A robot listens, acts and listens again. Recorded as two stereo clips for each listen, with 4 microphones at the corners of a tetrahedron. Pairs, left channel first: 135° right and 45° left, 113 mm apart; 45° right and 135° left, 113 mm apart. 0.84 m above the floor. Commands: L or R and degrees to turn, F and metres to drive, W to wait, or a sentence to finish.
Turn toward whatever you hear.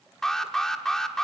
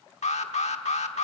R50
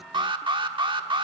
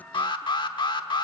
Facing the alarm.